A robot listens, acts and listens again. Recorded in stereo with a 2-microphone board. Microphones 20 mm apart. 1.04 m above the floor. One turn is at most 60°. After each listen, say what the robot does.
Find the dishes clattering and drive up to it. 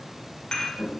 Turn 40° left.
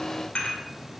Turn 60° left.
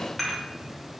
Turn 10° left.
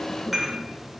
Drive 1.0 m forward.
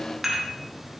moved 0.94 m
Drive 1.0 m forward.
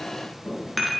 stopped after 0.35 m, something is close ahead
Arrived at the dishes clattering, straight ahead.